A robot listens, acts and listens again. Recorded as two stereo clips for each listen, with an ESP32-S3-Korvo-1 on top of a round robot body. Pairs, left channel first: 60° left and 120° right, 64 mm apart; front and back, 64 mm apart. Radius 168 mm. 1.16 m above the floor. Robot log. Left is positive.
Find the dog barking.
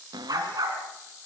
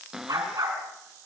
note: The dog barking: 145° right.
cmd yaw -145
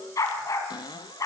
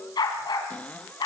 note: The dog barking is now 15° left.
cmd yaw +15
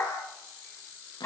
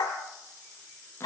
end: Found it: a dog barking, straight ahead, 2 to 4 m away.